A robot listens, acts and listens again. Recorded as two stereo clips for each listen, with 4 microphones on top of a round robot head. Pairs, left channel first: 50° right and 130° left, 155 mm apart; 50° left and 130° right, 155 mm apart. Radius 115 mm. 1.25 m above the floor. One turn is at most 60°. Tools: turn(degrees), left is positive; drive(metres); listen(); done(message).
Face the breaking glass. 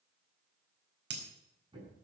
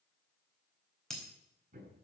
turn(degrees=60)
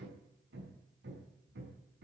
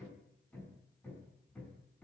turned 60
turn(degrees=60)
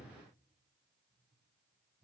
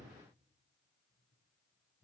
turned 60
turn(degrees=15)
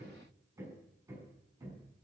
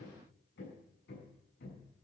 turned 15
done("I heard breaking glass from this way, but can't make it out now.")